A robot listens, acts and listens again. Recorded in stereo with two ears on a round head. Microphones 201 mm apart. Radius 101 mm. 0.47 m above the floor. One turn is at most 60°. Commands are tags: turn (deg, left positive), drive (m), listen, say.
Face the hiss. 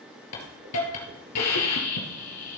<turn deg="60"/>
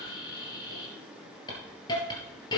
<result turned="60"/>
<turn deg="20"/>
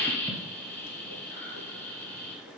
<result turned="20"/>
<turn deg="10"/>
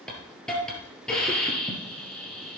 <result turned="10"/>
<say>Found it: a hiss, straight ahead.</say>